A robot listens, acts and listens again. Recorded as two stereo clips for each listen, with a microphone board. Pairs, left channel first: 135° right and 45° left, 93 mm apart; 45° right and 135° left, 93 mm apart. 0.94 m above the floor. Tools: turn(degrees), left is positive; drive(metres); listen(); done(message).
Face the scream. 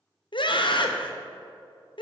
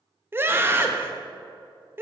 turn(degrees=-160)
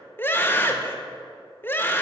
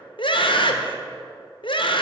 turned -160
turn(degrees=-70)
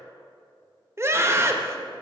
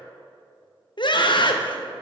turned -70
turn(degrees=-15)
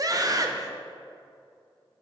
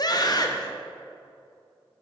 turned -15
done("Facing the scream, under 1 m away.")